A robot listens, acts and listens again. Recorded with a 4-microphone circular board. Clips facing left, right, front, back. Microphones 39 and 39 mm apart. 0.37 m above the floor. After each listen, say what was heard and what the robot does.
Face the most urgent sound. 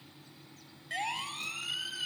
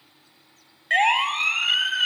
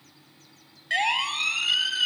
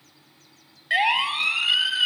The siren: 105° right. Turn 105° right.
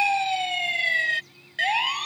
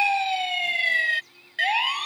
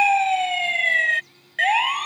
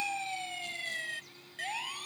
The siren is now 10° right. Turn 10° right.
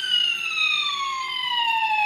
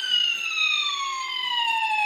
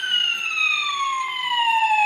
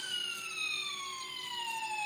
Facing the siren.